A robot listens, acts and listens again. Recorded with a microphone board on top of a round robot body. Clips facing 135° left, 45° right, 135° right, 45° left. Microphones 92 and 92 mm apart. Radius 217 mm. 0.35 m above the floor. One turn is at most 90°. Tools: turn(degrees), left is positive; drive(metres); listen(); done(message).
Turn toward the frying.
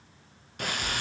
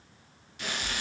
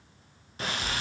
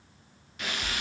turn(degrees=90)
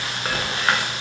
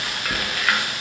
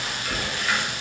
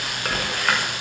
turn(degrees=75)
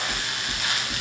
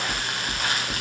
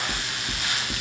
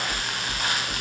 done("Facing the frying, 1 to 2 m away.")